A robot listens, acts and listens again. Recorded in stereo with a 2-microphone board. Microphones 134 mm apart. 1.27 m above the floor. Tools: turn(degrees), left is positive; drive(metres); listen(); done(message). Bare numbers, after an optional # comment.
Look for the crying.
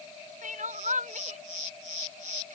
turn(-90)
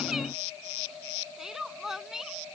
done("Facing the crying.")